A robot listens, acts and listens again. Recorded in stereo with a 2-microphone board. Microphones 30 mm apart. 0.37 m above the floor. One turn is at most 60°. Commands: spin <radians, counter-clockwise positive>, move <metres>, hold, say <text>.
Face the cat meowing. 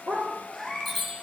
spin 0.52
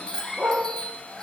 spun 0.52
hold
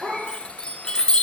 hold
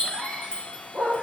say I heard a cat meowing, but can't make it out now. It was about 30° right or 150° left.